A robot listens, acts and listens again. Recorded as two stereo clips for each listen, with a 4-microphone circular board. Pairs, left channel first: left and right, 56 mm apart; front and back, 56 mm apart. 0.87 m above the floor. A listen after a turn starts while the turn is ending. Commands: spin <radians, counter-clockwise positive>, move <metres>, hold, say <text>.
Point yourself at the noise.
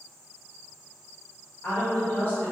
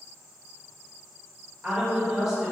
spin 1.66
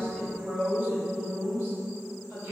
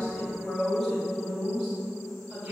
spin -2.09
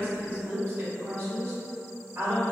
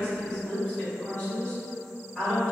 spin -1.13
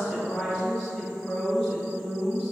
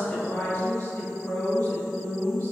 spin 0.26
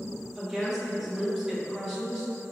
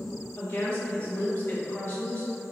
say Found it: a woman speaking, straight ahead, 1 to 2 m away.